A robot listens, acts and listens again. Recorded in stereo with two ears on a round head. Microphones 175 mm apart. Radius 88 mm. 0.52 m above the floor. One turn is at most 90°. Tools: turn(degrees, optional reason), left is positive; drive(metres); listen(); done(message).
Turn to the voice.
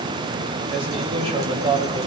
turn(degrees=-35, reason="The man speaking: about 35° right or 145° right.")
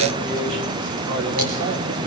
listen()
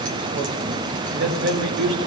turn(degrees=-90, reason="So it is at 110° right.")
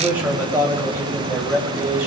turn(degrees=-15, reason="The man speaking is now 15° right.")
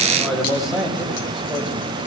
done("Found it: a man speaking, straight ahead.")